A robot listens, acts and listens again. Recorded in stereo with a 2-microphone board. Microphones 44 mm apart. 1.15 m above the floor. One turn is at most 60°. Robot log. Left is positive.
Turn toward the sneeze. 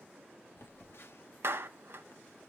cmd idle
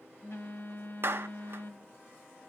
cmd idle
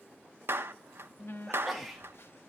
cmd yaw +30
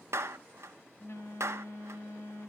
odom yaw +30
cmd idle
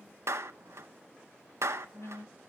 end: I heard a sneeze, but can't make it out now. It was about 30° right or 150° left.